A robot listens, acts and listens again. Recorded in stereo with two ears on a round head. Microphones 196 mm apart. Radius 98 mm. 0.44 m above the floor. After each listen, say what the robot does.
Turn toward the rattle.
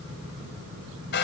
Keep listening.
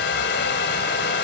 Keep listening.
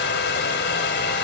I can't make out a rattle to turn to.